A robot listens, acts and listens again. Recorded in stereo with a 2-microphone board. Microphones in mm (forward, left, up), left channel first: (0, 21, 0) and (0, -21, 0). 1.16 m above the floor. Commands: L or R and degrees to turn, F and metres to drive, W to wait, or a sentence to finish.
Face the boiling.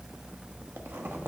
W
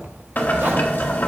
L45
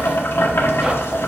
L85
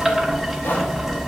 Found it: boiling, straight ahead.